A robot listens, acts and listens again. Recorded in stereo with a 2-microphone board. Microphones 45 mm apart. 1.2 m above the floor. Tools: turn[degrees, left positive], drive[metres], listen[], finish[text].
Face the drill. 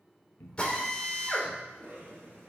Thought: The drill: about 25° left or 155° left.
Action: turn[25]
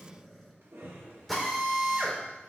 Action: finish[Found it: a drill, straight ahead.]